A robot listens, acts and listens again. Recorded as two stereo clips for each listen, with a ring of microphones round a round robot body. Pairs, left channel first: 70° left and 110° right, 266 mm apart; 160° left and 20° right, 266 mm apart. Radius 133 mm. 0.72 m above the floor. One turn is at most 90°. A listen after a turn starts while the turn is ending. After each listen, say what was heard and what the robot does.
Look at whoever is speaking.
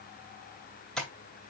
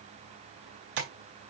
Keep listening.
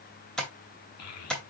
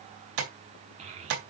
The child speaking: 45° left. Turn 45° left.
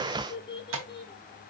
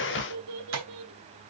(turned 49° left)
Facing the child speaking.